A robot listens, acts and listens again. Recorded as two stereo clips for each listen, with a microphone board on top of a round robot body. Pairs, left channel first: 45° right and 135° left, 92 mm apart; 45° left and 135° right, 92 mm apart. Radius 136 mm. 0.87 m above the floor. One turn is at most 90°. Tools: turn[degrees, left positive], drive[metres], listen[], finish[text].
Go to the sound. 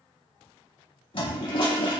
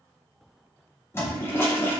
Thought: The toilet flushing: 20° right.
Action: turn[-20]
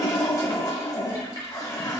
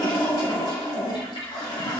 Action: drive[1.0]
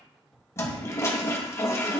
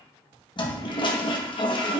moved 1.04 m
Thought: The toilet flushing is now 15° left.
Action: turn[15]
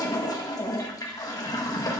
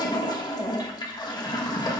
Action: drive[1.0]
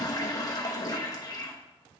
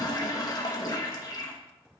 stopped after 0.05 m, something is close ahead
Action: finish[Arrived at the toilet flushing, straight ahead.]